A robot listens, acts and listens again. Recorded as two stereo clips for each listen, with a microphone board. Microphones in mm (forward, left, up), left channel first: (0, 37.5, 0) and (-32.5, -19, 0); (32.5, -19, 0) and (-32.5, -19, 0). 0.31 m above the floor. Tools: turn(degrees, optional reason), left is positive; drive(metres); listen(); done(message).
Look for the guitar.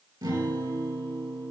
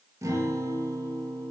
turn(degrees=-140, reason="The guitar: 140° right.")
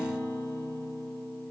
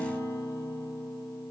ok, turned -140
turn(degrees=30, reason="The guitar is now 30° left.")
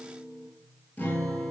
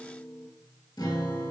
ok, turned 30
done("Facing the guitar.")